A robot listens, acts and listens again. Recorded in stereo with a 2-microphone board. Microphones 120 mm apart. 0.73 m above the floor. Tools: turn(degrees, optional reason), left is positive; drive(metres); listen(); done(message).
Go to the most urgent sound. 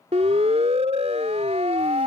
turn(degrees=-60, reason="The siren: about 60° right or 120° right.")
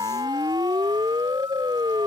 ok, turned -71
turn(degrees=-40, reason="So it is at 40° right.")
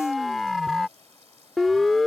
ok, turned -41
drive(metres=1.0)
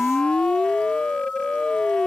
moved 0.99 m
turn(degrees=10, reason="The siren is now 10° left.")
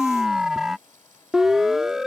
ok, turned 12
drive(metres=1.0)
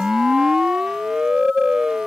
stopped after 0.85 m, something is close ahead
done("Arrived at the siren, straight ahead.")